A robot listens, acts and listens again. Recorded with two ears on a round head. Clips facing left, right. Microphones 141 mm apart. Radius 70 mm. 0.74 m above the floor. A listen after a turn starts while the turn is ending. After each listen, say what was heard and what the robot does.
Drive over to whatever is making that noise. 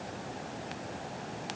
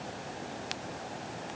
Keep listening.
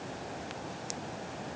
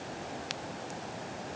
Keep listening.
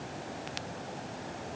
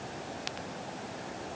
I can't make out anything.